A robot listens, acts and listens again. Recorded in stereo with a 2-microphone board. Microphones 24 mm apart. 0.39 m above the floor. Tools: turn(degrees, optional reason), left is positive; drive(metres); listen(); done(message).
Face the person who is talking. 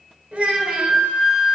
turn(degrees=-65, reason="The child speaking: about 65° right or 115° right.")
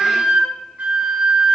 listen()
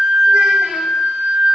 listen()
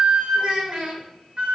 turn(degrees=-50, reason="So it is at 50° right.")
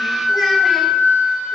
listen()
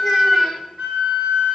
listen()
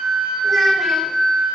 done("I heard a child speaking from this way, but can't make it out now.")